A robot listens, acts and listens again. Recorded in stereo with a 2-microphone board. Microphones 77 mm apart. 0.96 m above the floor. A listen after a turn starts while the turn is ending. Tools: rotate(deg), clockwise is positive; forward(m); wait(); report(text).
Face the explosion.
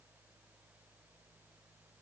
wait()
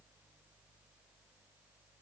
wait()
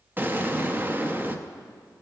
rotate(30)
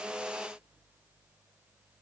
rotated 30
wait()
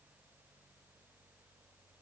report("I heard an explosion, but can't make it out now. It was about straight ahead or 120° right.")